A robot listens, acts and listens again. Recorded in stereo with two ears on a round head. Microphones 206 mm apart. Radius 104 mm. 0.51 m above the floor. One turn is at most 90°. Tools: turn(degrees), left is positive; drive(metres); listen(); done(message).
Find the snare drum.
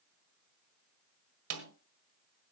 turn(degrees=-70)
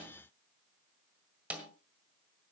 done("Facing the snare drum.")